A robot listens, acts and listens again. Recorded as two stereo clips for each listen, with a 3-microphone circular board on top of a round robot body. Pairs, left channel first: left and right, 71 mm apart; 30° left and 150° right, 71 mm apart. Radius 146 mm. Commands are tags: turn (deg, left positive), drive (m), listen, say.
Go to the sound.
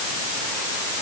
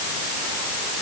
<listen/>
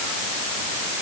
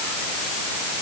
<listen/>
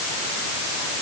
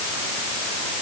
<say>I can't make out anything.</say>